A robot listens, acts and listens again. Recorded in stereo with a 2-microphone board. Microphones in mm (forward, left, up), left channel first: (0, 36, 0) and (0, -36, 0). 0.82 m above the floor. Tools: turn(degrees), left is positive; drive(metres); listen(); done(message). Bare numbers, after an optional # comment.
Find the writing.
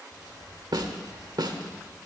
# The writing: about 50° left or 130° left.
turn(50)
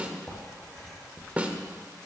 done("Found it: writing, straight ahead, 2 to 4 m away.")